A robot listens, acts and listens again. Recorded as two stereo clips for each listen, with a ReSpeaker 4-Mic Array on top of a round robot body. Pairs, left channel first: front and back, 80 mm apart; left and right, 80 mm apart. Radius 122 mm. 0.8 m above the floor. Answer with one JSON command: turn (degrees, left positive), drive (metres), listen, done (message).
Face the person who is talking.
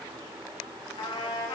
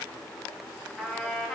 {"listen": true}
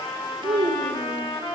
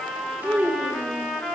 {"turn": -165}
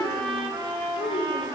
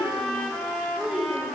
{"turn": -10}
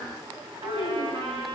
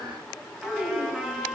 {"done": "Found it: a child speaking, straight ahead, 2 to 4 m away."}